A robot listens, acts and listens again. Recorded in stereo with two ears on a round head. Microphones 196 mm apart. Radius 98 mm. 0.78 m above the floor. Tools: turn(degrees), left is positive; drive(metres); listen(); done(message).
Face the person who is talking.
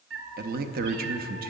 turn(degrees=-45)
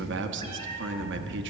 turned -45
turn(degrees=-80)
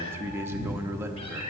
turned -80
turn(degrees=-15)
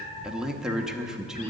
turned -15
done("Found it: a man speaking, straight ahead, under 1 m away.")